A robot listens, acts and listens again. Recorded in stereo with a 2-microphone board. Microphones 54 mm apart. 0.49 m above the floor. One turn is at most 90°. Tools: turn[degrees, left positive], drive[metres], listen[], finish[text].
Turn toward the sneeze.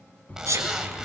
Thought: The sneeze: about 75° right or 105° right.
Action: turn[-75]
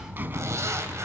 Action: listen[]
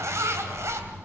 Action: finish[I heard a sneeze, but can't make it out now. It was about straight ahead or 30° right.]